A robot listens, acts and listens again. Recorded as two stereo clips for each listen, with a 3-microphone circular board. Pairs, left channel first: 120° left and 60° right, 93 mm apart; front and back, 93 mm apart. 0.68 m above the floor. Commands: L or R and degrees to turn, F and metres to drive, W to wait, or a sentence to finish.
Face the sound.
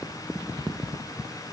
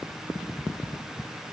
W
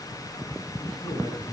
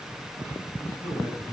L60
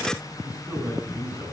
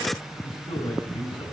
L10
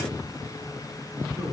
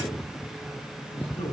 Facing the man speaking.